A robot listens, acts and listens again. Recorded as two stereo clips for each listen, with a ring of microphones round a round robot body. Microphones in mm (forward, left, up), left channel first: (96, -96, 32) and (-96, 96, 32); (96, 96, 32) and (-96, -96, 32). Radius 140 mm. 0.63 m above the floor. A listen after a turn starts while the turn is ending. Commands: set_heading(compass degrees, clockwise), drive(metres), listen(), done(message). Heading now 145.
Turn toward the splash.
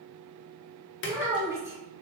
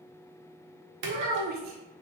set_heading(235)
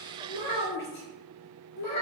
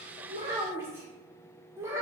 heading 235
done("I heard a splash from this way, but can't make it out now.")